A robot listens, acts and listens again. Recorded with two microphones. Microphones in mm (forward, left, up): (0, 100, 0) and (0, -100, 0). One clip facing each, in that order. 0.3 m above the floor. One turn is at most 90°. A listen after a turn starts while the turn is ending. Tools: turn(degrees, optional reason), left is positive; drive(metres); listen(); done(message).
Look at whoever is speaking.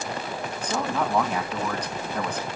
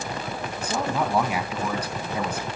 turn(degrees=-30)
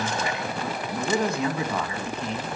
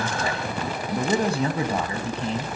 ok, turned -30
turn(degrees=-90, reason="So it is at 145° right.")
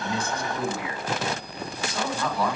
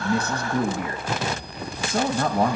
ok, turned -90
turn(degrees=-55, reason="The man speaking is now 55° right.")
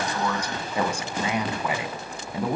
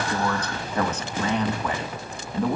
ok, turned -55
turn(degrees=10, reason="The man speaking is now 10° left.")
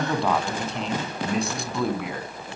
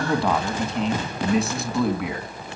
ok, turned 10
done("Facing the man speaking.")